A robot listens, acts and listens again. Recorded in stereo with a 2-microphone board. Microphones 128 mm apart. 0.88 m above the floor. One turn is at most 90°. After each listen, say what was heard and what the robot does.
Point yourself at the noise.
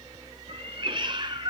The cat meowing: about 35° right or 145° right. Turn 35° right.
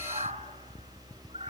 So it is at 125° right. Turn 90° right.
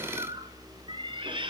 The cat meowing is now 40° right. Turn 40° right.
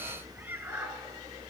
The cat meowing is now 15° right. Turn 15° right.
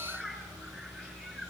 Found it: a cat meowing, straight ahead.